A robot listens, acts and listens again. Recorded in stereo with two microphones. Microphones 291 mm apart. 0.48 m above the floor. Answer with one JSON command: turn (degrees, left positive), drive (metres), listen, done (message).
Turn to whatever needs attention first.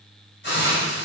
{"listen": true}
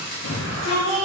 {"turn": 65}
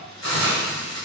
{"listen": true}
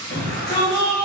{"turn": 40}
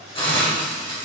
{"listen": true}
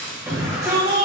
{"turn": -10}
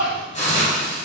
{"done": "Facing the shout, 2 to 4 m away."}